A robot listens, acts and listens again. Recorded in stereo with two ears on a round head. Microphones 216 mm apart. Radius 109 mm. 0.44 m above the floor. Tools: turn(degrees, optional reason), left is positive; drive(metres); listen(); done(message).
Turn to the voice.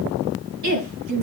turn(degrees=-90)
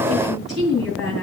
done("Found it: a woman speaking, straight ahead.")